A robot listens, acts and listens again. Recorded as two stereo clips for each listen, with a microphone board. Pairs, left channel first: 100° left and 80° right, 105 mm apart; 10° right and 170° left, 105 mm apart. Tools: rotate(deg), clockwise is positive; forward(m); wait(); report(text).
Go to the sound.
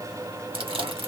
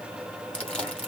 rotate(90)
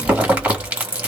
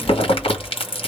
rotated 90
forward(1.0)
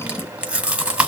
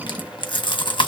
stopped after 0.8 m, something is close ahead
report("I am next to the chewing.")